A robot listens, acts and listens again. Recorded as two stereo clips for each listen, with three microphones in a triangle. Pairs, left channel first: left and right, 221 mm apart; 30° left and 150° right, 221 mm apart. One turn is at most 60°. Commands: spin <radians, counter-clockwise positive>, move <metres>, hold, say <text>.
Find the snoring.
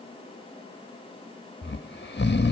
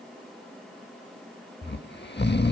spin 1.05
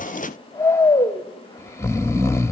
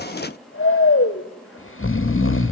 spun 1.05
spin 0.26
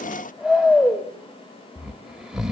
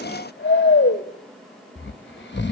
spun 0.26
say Found it: snoring, straight ahead, 1 to 2 m away.